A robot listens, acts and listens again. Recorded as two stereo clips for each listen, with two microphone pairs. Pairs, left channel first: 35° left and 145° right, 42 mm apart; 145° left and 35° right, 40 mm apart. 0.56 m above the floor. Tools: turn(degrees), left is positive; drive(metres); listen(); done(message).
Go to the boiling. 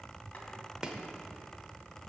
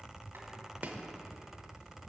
listen()
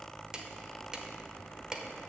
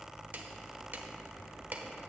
listen()
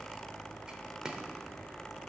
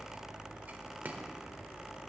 done("I can't make out boiling, only chopping.")